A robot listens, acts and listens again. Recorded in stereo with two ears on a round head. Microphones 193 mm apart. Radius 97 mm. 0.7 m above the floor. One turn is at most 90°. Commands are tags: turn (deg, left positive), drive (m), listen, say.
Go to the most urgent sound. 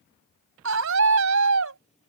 <turn deg="-65"/>
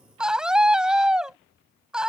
<drive m="1.0"/>
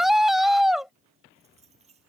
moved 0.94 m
<drive m="1.0"/>
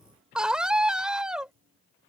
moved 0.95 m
<drive m="1.0"/>
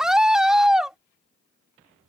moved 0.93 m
<drive m="1.0"/>
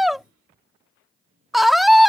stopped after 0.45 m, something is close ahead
<say>Arrived at the scream, straight ahead.</say>